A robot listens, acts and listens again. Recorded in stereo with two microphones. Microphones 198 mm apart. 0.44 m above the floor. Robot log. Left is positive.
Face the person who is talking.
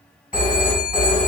cmd idle
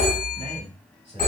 note: The man speaking: about 30° right or 150° right.
cmd yaw -30
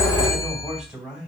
end: Found it: a man speaking, straight ahead, 2 to 4 m away.